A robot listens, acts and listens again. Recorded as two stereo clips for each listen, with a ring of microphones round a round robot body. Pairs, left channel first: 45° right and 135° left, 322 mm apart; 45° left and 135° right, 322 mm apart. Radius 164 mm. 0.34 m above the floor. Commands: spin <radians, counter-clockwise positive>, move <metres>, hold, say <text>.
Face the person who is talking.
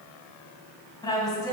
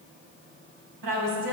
spin -2.18
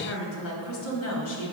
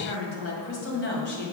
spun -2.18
spin -0.17
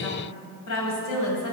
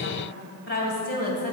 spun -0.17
spin -0.35
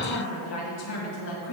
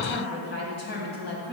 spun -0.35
spin -0.17
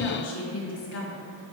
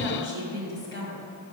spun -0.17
say Found it: a woman speaking, straight ahead, 2 to 4 m away.